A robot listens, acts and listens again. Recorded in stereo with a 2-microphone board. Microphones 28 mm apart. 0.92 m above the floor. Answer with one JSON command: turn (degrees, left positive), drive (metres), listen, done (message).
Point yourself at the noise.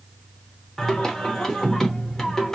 {"turn": 30}
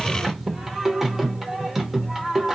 {"turn": -15}
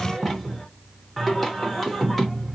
{"done": "Found it: singing, straight ahead, under 1 m away."}